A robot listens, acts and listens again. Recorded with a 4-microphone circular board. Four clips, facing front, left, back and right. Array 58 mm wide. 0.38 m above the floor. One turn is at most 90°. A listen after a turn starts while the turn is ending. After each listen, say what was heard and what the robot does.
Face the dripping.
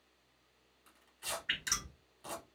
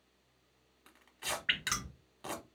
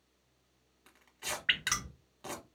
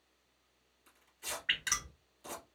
The dripping: 160° left. Turn 90° left.
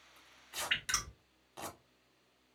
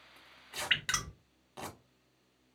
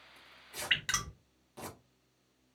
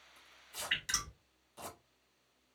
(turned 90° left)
The dripping is now 115° left. Turn 90° left.
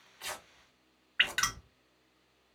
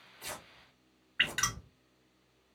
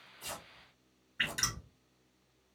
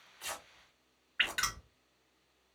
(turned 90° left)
Found it: dripping, straight ahead.